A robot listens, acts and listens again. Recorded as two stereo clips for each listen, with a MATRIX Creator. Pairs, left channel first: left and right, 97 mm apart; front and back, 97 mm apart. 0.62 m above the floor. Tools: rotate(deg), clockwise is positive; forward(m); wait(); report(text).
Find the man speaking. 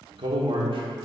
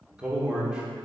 rotate(100)
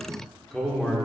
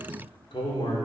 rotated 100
report("Found it: a man speaking, straight ahead, 1 to 2 m away.")